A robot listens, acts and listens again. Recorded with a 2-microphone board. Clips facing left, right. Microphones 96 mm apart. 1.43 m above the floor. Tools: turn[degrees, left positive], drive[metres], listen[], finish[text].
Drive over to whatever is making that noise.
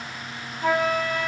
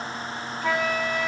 Thought: The flute: about 40° left or 140° left.
Action: turn[40]
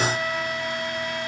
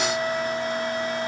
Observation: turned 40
Thought: So it is at 100° left.
Action: turn[100]
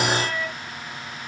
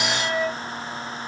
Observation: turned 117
Thought: The flute is now 20° right.
Action: turn[-20]
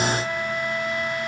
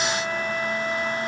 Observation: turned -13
Action: drive[1.0]
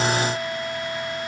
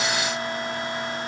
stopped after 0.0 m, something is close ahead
Thought: The flute is now 10° right.
Action: turn[-10]
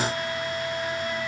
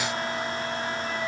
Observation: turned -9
Action: finish[Something is in my way. I am facing the flute but have not reached it.]